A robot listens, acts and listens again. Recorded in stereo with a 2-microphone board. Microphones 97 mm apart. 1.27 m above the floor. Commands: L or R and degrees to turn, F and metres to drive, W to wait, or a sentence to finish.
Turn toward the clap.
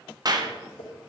R45
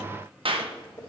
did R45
R85
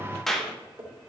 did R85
Found it: a clap, straight ahead.